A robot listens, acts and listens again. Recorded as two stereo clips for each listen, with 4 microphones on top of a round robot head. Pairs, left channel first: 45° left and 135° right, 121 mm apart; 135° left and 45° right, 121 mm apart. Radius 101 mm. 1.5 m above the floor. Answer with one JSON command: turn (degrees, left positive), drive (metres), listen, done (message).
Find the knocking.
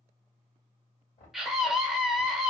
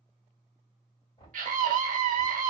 {"turn": 80}
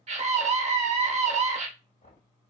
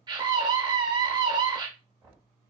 {"turn": 25}
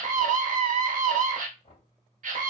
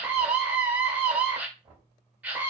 {"done": "Found it: knocking, straight ahead, 2 to 4 m away."}